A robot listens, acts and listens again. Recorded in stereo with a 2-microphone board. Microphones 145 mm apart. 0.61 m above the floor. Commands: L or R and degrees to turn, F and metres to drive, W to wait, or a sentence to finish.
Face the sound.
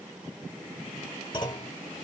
L30
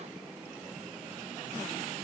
W
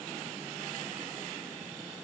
I heard a clunk, but can't make it out now. It was about straight ahead or 120° left.